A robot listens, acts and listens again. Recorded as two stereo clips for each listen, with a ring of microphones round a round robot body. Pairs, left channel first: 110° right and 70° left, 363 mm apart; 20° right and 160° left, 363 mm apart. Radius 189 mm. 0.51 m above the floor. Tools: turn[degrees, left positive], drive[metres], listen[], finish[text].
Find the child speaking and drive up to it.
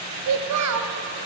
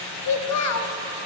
Thought: The child speaking: 25° left.
Action: turn[25]
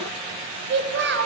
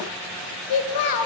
Thought: The child speaking is now 10° left.
Action: turn[10]
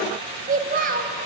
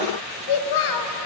Action: drive[1.0]
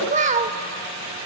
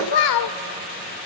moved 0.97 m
Action: drive[1.0]
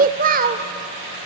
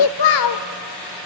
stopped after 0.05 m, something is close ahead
Action: finish[Arrived at the child speaking, straight ahead.]